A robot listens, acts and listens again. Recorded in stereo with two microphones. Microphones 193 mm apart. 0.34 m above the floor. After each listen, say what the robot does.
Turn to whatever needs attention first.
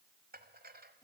Keep listening.
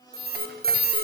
Turn 50° right.
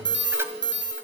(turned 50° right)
Turn 75° right.
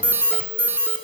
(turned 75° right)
Turn 10° right.
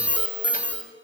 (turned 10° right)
Facing the alarm, 2 to 4 m away.